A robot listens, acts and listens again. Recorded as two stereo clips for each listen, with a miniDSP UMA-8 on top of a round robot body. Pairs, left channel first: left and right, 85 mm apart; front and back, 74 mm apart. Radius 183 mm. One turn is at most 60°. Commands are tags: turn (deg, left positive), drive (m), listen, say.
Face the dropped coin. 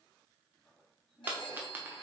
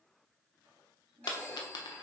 <turn deg="-20"/>
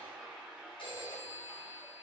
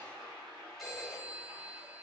<say>Facing where the dropped coin came from. I can't hear it now.</say>